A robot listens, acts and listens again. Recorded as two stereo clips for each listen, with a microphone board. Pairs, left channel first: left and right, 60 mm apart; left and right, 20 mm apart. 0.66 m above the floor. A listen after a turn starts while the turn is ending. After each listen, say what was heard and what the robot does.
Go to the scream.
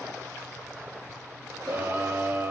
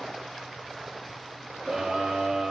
The scream: about 30° right or 150° right. Turn 30° right.
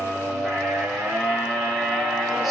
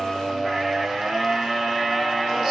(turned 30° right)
Drive 1.0 m forward.
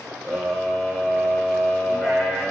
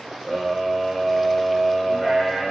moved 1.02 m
Drive 1.0 m forward.
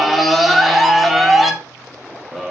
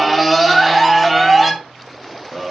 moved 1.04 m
Drive 1.0 m forward.
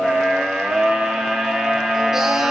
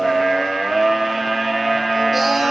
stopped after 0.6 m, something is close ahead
The scream is now 10° right. Turn 10° right.
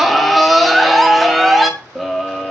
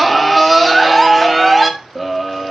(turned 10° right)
Arrived at the scream, straight ahead.